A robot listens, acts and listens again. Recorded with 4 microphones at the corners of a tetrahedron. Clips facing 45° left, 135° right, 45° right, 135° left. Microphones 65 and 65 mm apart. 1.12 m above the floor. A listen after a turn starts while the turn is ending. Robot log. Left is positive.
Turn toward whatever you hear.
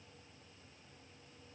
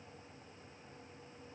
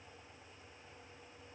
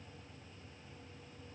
cmd idle
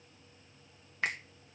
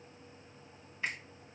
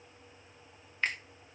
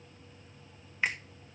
note: The finger snap: 55° left.
cmd yaw +55
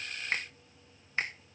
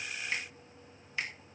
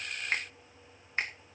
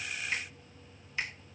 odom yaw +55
end: Found it: a finger snap, straight ahead, 1 to 2 m away.